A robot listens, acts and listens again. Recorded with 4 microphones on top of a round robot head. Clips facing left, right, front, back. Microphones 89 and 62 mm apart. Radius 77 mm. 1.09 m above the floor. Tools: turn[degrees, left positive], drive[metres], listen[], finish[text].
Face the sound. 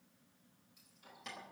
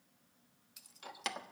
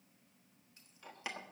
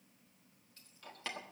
Thought: The keys jangling: 80° right.
Action: turn[-80]
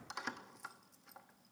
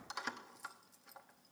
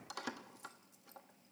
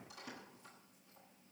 Action: finish[Found it: keys jangling, straight ahead.]